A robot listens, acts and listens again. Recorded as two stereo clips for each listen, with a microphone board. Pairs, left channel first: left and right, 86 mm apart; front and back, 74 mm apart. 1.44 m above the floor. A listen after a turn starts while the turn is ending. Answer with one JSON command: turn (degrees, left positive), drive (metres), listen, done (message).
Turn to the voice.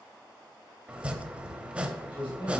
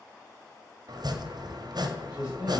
{"turn": 105}
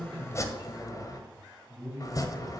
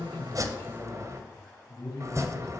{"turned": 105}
{"turn": 45}
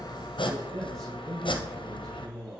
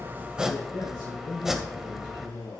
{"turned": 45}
{"done": "Found it: a man speaking, straight ahead, over 4 m away."}